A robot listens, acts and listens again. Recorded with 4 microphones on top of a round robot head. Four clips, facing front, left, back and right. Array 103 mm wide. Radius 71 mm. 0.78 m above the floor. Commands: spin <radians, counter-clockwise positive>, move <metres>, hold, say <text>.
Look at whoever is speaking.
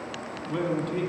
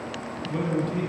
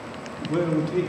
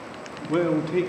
spin -1.83
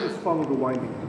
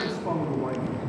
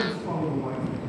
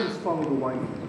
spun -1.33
spin -0.44
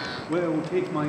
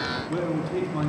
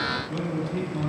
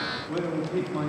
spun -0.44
say Facing the man speaking, 1 to 2 m away.